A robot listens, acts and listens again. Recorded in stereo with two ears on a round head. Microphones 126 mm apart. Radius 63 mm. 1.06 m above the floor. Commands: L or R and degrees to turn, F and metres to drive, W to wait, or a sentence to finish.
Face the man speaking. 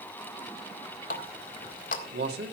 R90
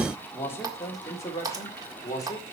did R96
L25
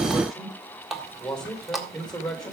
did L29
Found it: a man speaking, straight ahead, 2 to 4 m away.